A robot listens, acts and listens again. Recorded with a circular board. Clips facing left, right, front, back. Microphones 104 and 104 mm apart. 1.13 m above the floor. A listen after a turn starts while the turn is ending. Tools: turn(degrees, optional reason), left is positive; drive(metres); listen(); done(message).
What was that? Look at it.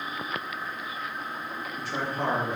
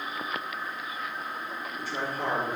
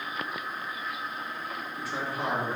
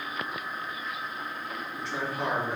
turn(degrees=85, reason="The man speaking: 85° left.")
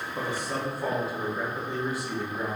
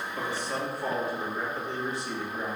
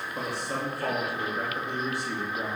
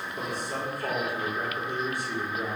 done("Found it: a man speaking, straight ahead.")